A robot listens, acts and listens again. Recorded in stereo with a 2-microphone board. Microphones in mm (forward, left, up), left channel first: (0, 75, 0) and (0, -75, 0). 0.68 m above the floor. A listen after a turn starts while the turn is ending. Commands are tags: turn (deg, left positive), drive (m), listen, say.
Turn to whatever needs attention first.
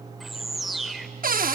<listen/>
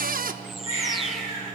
<turn deg="50"/>
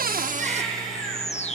<say>Found it: a baby crying, straight ahead, over 4 m away.</say>